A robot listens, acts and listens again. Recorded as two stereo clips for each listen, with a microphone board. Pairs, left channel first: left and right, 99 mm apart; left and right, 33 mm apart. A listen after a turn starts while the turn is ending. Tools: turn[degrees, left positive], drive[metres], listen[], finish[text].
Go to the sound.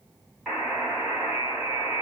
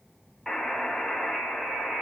Action: turn[30]
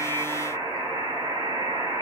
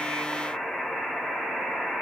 Thought: So it is at 25° right.
Action: turn[-25]
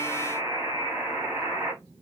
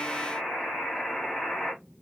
Thought: The buzzer is now 10° right.
Action: turn[-10]
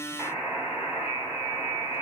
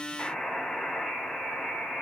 Action: drive[1.0]
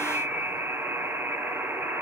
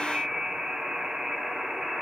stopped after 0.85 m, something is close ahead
Thought: The buzzer is now 20° right.
Action: turn[-20]
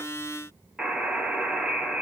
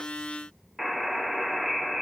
Action: finish[I am next to the buzzer.]